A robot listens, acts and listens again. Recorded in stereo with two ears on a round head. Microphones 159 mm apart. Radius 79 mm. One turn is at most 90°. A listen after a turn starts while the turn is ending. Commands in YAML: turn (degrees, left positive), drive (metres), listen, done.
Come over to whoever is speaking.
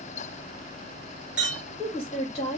turn: 35
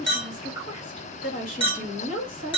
turn: 90
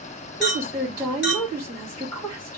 turn: 25
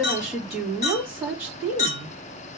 drive: 1.0
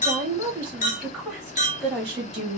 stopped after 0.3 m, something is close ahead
done: "Something is in my way. I am facing the woman speaking but have not reached it."